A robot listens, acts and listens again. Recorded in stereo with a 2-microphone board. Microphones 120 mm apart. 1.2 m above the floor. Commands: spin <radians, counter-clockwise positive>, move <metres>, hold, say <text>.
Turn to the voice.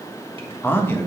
spin 0.35
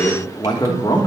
spin 2.53
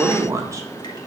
spin -0.44
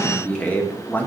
spin 0.26
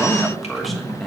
say Found it: a man speaking, straight ahead, 1 to 2 m away.